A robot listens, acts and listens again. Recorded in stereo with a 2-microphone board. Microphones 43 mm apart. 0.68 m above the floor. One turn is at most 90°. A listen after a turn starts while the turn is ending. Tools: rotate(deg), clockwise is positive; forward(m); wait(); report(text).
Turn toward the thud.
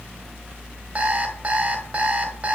wait()
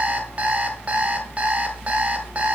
wait()
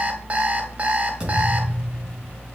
rotate(20)
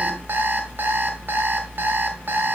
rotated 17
wait()
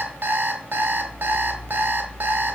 report("I heard a thud, but can't make it out now. It was about straight ahead or 145° right.")